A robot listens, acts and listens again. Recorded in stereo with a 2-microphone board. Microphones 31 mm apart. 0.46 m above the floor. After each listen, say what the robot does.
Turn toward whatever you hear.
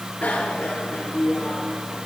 Turn 70° left.
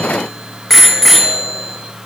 Found it: a bicycle bell, straight ahead, over 4 m away.